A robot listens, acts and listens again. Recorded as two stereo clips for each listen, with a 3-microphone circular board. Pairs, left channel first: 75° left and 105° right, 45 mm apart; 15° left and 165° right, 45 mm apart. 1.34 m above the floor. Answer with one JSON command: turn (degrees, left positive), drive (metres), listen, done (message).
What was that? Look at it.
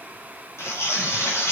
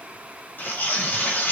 {"turn": 60}
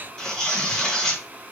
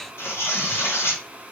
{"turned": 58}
{"done": "Found it: tearing paper, straight ahead."}